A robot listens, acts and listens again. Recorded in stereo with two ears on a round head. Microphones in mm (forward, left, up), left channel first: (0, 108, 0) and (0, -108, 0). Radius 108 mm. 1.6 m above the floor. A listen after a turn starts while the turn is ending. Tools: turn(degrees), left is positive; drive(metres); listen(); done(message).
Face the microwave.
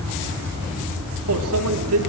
turn(degrees=-70)
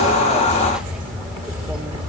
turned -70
listen()
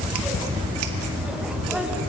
listen()
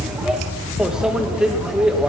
done("Facing the microwave.")